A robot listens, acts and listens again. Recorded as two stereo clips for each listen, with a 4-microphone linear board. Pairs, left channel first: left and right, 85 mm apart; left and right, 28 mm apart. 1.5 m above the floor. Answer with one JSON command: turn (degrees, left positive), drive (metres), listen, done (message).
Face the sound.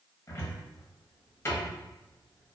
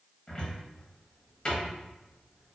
{"turn": 30}
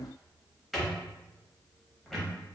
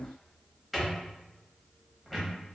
{"done": "Facing the cupboard door, under 1 m away."}